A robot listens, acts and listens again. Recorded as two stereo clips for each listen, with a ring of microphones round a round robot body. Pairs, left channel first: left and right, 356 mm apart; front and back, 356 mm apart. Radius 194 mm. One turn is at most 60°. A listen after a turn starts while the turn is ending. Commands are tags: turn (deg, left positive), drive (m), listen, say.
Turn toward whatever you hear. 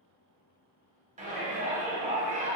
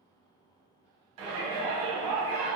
<turn deg="-60"/>
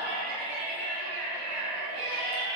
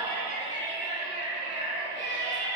<turn deg="-60"/>
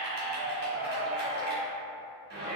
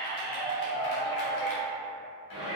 <turn deg="-25"/>
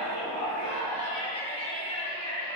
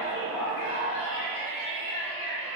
<turn deg="20"/>
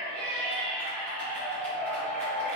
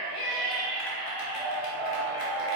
<say>Facing the shout, 1 to 2 m away.</say>